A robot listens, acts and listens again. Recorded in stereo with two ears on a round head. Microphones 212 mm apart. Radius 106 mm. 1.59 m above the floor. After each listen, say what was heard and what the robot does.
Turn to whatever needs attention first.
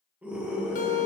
Turn 30° right.
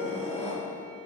So it is at 25° left. Turn 25° left.
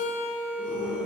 Facing the scream, 2 to 4 m away.